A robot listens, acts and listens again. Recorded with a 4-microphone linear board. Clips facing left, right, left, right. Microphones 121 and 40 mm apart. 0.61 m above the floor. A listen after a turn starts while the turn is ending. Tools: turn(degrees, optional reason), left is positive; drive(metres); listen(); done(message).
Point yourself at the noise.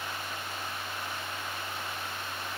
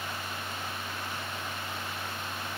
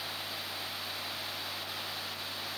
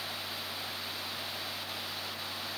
listen()
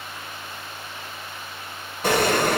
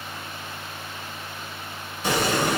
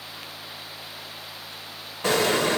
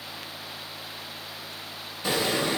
turn(degrees=60, reason="The explosion: about 60° left or 120° left.")
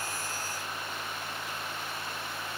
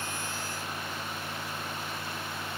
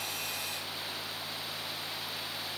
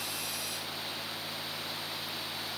listen()
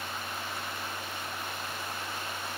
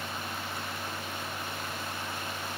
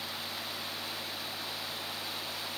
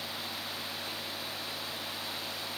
done("I heard an explosion, but can't make it out now. It was about straight ahead or 60° left.")